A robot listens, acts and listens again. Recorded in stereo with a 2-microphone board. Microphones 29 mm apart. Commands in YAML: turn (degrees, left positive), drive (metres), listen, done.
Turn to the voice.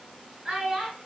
turn: -30
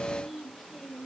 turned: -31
done: "Facing the child speaking."